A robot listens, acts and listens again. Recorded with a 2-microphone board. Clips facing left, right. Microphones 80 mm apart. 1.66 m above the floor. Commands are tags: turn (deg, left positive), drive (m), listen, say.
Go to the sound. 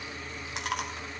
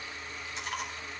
<turn deg="75"/>
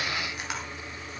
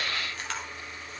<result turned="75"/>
<turn deg="15"/>
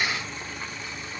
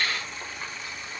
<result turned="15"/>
<listen/>
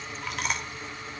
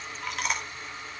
<drive m="1.0"/>
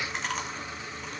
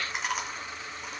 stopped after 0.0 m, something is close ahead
<say>Something is in my way. I am facing the chewing but have not reached it.</say>